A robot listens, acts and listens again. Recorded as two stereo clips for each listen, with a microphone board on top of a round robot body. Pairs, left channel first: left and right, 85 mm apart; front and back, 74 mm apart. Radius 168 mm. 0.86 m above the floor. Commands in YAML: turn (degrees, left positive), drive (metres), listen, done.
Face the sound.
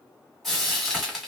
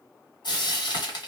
done: "Found it: frying, straight ahead."